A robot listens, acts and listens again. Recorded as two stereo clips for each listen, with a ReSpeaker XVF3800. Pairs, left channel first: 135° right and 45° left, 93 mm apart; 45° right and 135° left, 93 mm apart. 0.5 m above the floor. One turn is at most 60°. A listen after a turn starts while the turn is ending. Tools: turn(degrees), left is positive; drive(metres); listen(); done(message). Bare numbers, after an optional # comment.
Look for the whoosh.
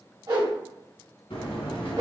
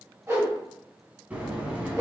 # The whoosh: 75° left.
turn(60)
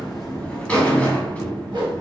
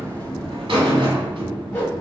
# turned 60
# Nothing new. It was at 15° left.
turn(15)
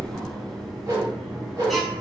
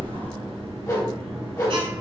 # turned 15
listen()
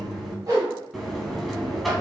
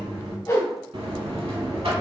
done("Found it: a whoosh, straight ahead.")